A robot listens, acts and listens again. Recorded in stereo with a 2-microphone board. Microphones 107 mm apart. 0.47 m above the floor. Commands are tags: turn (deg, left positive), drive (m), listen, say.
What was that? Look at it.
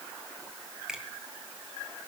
<turn deg="-30"/>
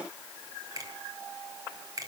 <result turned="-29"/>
<turn deg="-145"/>
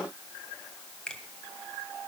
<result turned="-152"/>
<turn deg="10"/>
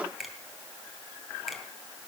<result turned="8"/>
<say>Facing the finger snap.</say>